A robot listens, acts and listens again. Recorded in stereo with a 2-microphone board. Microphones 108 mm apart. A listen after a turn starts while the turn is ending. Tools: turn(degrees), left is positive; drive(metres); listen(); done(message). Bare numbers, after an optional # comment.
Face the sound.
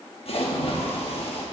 # The splash: about 60° left or 120° left.
turn(60)
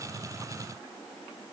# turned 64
listen()
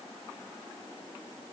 done("I heard a splash, but can't make it out now. It was about 5° right or 55° left.")